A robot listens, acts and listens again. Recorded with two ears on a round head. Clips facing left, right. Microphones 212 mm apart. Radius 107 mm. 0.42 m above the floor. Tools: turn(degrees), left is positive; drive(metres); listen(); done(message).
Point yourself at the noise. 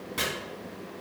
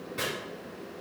turn(degrees=70)
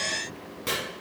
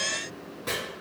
turn(degrees=35)
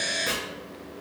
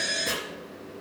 turn(degrees=10)
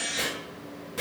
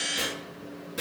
done("Facing the chopping.")